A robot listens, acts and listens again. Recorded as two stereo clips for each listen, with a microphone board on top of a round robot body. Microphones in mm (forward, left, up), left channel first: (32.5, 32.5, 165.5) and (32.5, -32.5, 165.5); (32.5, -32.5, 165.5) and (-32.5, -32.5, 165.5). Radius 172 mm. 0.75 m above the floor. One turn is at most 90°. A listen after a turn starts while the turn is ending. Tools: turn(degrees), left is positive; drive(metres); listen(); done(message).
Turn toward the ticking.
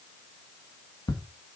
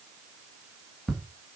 turn(degrees=85)
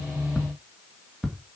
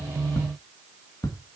done("Facing the ticking, 2 to 4 m away.")